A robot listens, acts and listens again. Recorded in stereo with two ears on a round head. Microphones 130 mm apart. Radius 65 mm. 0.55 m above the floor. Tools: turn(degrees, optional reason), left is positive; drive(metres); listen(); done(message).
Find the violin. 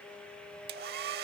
listen()
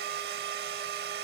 listen()
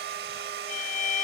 turn(degrees=55, reason="The violin: about 55° left or 125° left.")
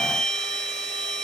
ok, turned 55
done("Facing the violin.")